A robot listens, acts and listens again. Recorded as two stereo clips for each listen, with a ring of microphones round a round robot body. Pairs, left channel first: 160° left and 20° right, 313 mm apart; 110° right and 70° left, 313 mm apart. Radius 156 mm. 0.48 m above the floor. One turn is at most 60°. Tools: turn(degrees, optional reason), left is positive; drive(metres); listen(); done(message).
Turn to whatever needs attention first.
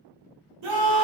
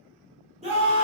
done("Facing the scream, 1 to 2 m away.")